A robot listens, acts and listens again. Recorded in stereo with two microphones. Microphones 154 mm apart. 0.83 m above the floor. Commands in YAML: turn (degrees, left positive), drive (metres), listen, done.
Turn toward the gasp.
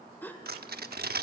turn: 30
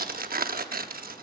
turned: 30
listen: true
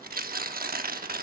done: "I heard a gasp, but can't make it out now. It was about 20° right or 140° left."